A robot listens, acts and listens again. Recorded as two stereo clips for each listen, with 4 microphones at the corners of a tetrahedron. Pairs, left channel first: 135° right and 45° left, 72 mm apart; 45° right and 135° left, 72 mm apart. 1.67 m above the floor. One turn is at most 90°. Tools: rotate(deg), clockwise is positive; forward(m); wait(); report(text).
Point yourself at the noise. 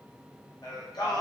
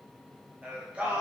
rotate(90)
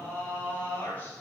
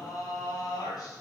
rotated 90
rotate(70)
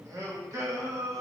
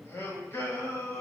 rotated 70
report("Facing the singing.")